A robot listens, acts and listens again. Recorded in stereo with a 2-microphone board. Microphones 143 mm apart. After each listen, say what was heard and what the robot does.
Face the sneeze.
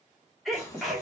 Turn 30° left.
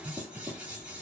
Keep listening.
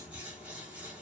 I heard a sneeze, but can't make it out now. It was about 30° right or 150° left.